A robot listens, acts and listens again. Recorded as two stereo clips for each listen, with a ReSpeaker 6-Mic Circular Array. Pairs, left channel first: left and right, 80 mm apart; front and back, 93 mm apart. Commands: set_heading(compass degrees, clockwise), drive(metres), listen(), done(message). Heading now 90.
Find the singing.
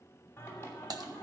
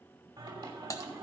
set_heading(300)
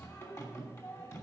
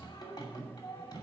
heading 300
set_heading(255)
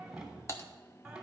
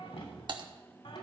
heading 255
done("Found it: singing, straight ahead.")